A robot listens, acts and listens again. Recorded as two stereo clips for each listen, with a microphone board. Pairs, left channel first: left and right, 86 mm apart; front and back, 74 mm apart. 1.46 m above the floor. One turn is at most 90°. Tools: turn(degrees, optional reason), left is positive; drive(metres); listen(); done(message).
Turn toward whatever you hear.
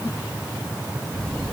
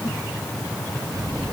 turn(degrees=90, reason="The squeak: 170° left.")
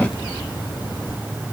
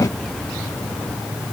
turn(degrees=80, reason="Nothing new. It was at 80° left.")
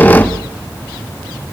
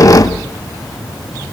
turn(degrees=25, reason="The squeak is now 25° left.")
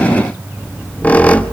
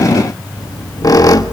turn(degrees=20, reason="The squeak is now 20° left.")
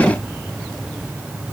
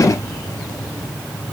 listen()
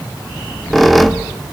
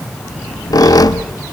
done("Found it: a squeak, straight ahead.")